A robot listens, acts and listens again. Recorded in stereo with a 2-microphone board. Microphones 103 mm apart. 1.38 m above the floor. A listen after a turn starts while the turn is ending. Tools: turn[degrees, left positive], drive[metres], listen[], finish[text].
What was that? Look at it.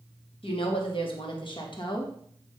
Thought: The woman speaking: about 50° left or 130° left.
Action: turn[50]
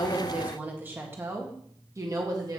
Thought: So it is at 40° right.
Action: turn[-40]
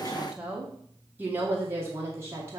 Thought: The woman speaking is now 30° right.
Action: turn[-30]
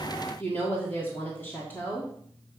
Thought: The woman speaking is now 15° left.
Action: turn[15]
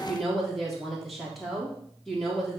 Action: finish[Facing the woman speaking.]